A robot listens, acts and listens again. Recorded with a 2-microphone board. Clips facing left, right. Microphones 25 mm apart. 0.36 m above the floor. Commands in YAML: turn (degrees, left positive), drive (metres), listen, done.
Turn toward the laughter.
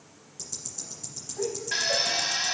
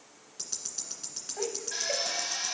turn: -60
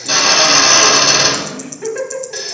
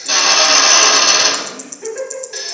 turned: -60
turn: 30
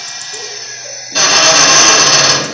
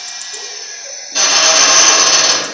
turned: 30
listen: true
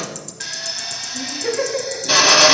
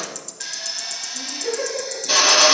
turn: 30
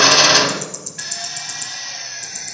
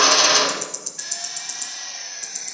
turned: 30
listen: true
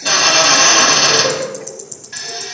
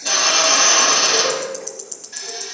turn: 10
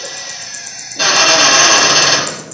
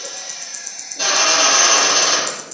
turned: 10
listen: true
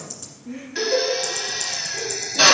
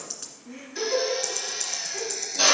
done: "Found it: laughter, straight ahead."